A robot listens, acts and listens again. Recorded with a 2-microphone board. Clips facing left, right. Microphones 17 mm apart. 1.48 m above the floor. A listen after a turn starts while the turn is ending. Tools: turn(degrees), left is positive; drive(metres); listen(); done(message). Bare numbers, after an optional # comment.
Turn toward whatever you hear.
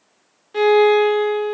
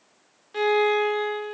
turn(-30)
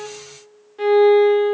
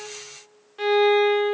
# So it is at 150° right.
turn(-150)
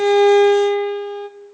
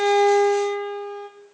# The violin is now 35° left.
turn(35)
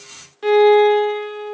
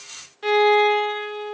# The violin is now 15° left.
turn(15)
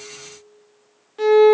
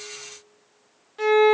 done("Found it: a violin, straight ahead.")